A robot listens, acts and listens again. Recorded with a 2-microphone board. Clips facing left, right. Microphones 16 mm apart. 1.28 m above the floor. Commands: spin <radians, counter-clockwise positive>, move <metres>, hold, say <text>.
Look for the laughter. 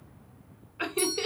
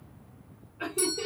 spin 1.57
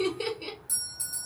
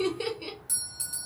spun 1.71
say Found it: laughter, straight ahead.